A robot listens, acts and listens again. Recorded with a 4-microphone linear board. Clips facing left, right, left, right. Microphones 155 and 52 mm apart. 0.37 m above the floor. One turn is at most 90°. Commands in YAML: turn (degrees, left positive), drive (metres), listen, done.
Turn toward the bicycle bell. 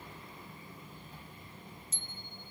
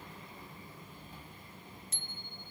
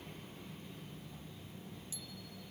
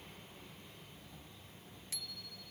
turn: -70
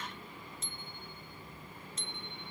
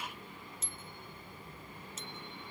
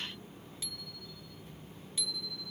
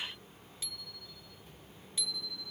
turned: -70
done: "Found it: a bicycle bell, straight ahead."